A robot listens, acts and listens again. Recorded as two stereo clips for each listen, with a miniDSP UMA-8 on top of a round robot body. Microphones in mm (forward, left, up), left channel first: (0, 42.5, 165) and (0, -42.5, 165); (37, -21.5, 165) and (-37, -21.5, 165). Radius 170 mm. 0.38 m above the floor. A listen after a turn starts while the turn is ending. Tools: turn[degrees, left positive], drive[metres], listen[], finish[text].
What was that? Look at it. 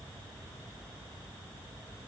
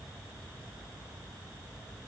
Action: listen[]
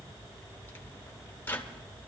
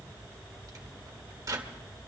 Thought: The microwave: 155° left.
Action: turn[155]
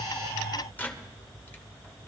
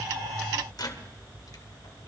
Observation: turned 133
Thought: The microwave is now 25° left.
Action: turn[25]
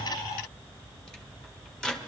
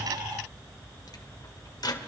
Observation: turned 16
Thought: The microwave is now 10° left.
Action: turn[10]
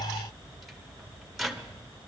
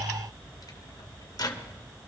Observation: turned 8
Action: finish[Facing the microwave.]